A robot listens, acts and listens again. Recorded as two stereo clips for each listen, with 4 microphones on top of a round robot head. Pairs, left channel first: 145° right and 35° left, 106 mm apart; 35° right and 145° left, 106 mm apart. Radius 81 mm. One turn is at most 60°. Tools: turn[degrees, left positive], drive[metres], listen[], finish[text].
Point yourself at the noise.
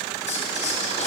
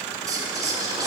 Thought: The whispering: 155° right.
Action: turn[-60]
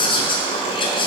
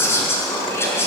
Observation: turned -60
Thought: The whispering is now 105° right.
Action: turn[-60]
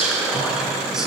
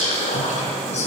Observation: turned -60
Thought: The whispering is now 50° right.
Action: turn[-50]
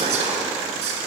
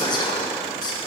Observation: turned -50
Thought: The whispering is now 15° left.
Action: turn[15]
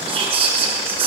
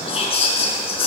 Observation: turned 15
Action: finish[Facing the whispering, over 4 m away.]